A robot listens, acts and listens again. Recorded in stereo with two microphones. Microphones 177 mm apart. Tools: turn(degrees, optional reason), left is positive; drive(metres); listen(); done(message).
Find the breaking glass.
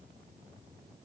listen()
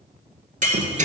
turn(degrees=-45, reason="The breaking glass: about 45° right or 135° right.")
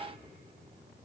listen()
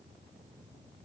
done("I heard breaking glass, but can't make it out now. It was about straight ahead or 90° right.")